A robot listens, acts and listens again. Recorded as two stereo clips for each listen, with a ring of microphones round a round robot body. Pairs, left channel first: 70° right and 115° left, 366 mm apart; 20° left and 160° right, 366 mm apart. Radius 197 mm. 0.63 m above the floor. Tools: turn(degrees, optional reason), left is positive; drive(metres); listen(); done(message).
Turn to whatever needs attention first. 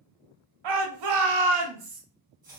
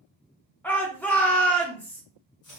turn(degrees=110, reason="The shout: 110° left.")
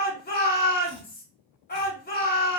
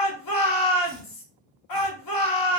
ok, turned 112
done("Facing the shout, 1 to 2 m away.")